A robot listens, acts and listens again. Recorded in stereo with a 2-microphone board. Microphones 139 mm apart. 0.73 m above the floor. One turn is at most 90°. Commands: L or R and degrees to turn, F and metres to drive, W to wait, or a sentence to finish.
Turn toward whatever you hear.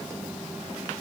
W
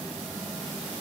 W
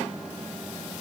I can't make out anything.